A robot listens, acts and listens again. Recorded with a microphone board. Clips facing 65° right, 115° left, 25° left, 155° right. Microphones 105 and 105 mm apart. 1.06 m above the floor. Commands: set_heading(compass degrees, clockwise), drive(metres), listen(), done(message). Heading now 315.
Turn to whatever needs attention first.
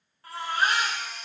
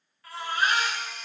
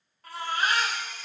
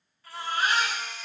set_heading(325)
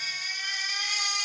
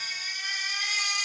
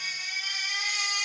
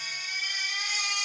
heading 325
done("Facing the baby crying.")